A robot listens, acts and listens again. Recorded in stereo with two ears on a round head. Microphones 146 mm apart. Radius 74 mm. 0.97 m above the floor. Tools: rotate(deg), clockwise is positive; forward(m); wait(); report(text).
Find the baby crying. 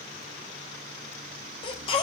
rotate(-30)
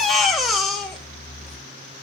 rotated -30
report("Found it: a baby crying, straight ahead, 2 to 4 m away.")